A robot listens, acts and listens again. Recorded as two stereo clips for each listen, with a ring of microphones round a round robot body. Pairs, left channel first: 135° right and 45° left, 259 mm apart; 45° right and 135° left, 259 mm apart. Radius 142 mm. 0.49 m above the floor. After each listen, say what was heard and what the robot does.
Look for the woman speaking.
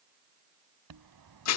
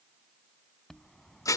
Keep listening.
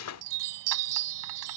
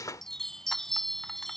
Keep listening.
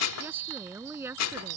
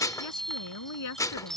The woman speaking: 35° right. Turn 35° right.
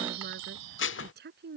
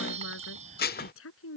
Facing the woman speaking.